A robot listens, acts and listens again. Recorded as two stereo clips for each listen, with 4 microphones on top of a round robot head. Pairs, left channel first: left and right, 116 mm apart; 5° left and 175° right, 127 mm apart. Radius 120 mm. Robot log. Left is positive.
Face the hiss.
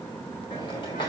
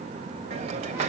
note: The hiss: 155° left.
cmd yaw +155
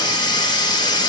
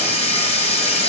note: The hiss is now 40° left.
cmd yaw +40
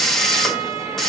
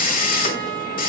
end: Found it: a hiss, straight ahead, 1 to 2 m away.